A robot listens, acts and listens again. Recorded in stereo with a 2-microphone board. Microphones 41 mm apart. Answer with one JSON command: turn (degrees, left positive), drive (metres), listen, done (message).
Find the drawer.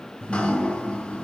{"listen": true}
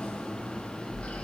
{"listen": true}
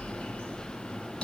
{"done": "I can't make out a drawer to turn to."}